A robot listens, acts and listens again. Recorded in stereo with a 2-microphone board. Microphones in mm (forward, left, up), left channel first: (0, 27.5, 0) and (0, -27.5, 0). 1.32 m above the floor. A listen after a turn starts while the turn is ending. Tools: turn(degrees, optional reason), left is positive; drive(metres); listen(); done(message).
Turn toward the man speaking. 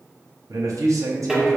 turn(degrees=-90)
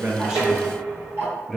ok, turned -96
done("Facing the man speaking, under 1 m away.")